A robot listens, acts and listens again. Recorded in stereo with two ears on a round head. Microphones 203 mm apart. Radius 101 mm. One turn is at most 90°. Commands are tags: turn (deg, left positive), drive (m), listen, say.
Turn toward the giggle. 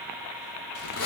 <listen/>
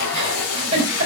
<turn deg="-25"/>
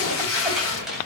<listen/>
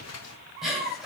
<say>Facing the giggle, over 4 m away.</say>